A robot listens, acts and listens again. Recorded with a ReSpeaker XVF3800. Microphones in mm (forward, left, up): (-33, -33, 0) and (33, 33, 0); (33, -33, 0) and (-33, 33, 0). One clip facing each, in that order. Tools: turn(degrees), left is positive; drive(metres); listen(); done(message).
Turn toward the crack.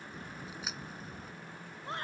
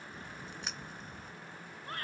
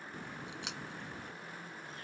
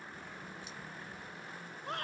turn(degrees=-50)
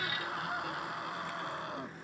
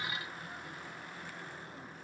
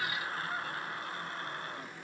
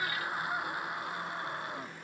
done("I heard a crack from this way, but can't make it out now.")